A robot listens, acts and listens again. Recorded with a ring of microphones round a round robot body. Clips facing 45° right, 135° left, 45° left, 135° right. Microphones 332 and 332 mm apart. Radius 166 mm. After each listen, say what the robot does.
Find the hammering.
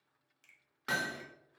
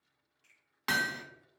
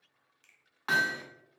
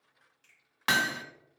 Turn 160° right.
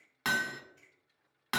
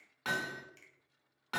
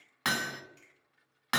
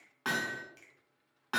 Facing the hammering, under 1 m away.